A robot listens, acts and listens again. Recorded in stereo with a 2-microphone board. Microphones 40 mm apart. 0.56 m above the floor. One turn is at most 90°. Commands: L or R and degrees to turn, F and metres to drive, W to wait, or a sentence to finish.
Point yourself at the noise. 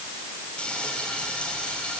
L25
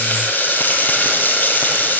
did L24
L90
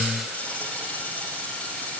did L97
L35
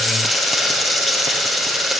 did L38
Found it: frying, straight ahead.